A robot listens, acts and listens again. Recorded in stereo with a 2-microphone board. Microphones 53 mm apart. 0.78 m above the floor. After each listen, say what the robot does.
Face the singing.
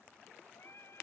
Turn 55° left.
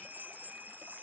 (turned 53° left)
Keep listening.
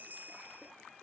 Keep listening.
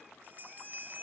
I heard singing, but can't make it out now. It was about straight ahead or 75° left.